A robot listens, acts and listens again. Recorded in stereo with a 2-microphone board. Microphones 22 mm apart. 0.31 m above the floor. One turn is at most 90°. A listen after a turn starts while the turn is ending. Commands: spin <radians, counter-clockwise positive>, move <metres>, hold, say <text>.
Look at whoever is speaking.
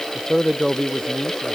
spin 0.44
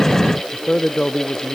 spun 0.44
spin 1.57
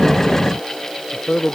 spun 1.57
spin 1.22
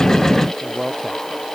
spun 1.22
say Facing the man speaking.